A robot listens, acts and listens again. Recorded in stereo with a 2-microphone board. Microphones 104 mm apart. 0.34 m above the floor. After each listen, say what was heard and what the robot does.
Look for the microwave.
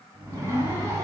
The microwave: about 70° right or 110° right. Turn 70° right.
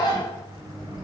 So it is at 30° right. Turn 30° right.
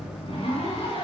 Facing the microwave.